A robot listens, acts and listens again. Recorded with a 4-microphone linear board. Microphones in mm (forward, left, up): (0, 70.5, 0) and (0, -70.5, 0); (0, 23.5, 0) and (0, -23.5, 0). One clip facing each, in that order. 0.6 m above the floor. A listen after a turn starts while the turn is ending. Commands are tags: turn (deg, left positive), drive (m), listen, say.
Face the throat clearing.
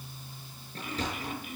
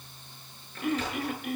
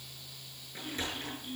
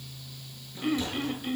<turn deg="-90"/>
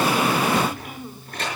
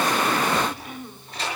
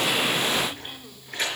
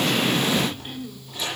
<turn deg="10"/>
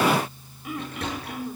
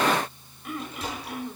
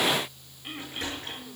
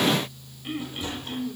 <say>Found it: throat clearing, straight ahead, 1 to 2 m away.</say>